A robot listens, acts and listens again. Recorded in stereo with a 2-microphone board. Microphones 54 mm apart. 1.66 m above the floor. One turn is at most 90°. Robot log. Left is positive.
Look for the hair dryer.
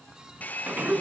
note: The hair dryer: about 30° left or 150° left.
cmd yaw +30
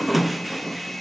end: Found it: a hair dryer, straight ahead.